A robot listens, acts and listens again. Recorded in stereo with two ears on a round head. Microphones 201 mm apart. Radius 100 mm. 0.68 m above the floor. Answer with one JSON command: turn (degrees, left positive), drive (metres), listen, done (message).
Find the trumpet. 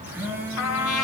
{"turn": 75}
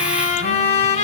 {"turn": 30}
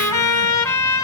{"turn": 15}
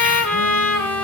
{"done": "Found it: a trumpet, straight ahead, 2 to 4 m away."}